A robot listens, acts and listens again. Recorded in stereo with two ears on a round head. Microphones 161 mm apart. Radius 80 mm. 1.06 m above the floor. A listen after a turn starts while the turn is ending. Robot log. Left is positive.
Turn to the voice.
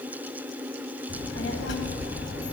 note: The child speaking: about 70° left or 110° left.
cmd yaw +70
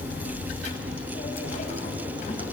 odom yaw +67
note: So it is at 40° left.
cmd yaw +40
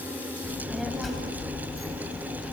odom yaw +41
end: Found it: a child speaking, straight ahead.